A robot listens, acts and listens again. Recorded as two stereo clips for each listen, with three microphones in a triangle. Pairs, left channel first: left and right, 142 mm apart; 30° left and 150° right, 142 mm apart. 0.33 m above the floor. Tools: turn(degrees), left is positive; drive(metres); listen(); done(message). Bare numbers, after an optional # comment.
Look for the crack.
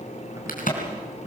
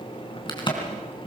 # The crack: 85° left.
turn(85)
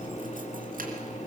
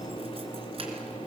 done("Facing where the crack came from. I can't hear it now.")